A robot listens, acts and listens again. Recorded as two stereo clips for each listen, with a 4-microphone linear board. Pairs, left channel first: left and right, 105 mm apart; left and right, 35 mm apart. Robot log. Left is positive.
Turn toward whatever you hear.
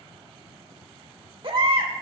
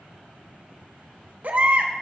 note: The baby crying: about 55° right or 125° right.
cmd yaw -55
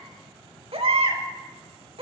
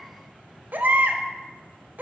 note: So it is at 65° right.
cmd yaw -65
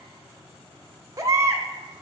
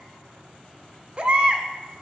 note: The baby crying is now 30° right.
cmd yaw -30
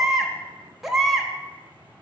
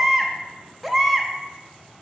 end: Found it: a baby crying, straight ahead, 1 to 2 m away.